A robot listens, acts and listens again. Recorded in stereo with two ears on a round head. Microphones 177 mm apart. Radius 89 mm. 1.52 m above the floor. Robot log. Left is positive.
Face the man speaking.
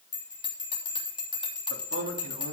note: The man speaking: about 75° right or 105° right.
cmd yaw -75
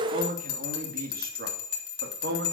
note: So it is at 55° right.
cmd yaw -55
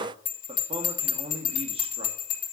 note: The man speaking is now 30° right.
cmd yaw -30
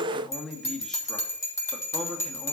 end: Found it: a man speaking, straight ahead, 2 to 4 m away.